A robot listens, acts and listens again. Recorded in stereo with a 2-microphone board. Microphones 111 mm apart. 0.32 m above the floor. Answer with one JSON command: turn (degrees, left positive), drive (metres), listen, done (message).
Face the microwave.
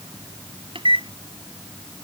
{"turn": -55}
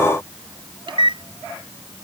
{"turn": -60}
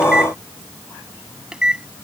{"turn": -10}
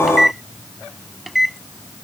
{"done": "Facing the microwave."}